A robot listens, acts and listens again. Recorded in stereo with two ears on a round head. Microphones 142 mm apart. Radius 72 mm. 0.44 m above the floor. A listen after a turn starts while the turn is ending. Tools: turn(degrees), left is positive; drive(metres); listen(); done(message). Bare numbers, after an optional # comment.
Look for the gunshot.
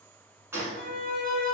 # The gunshot: about 15° right or 165° right.
turn(-15)
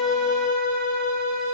listen()
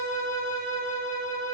done("I heard a gunshot, but can't make it out now. It was about straight ahead or 150° right.")